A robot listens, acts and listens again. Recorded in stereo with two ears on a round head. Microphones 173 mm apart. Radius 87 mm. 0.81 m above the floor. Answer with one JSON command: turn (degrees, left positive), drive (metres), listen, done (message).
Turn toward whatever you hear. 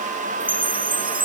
{"turn": -30}
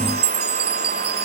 {"turn": -120}
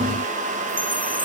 {"listen": true}
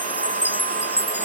{"turn": -10}
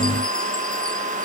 {"listen": true}
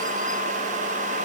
{"listen": true}
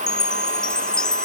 {"done": "Found it: a chime, straight ahead."}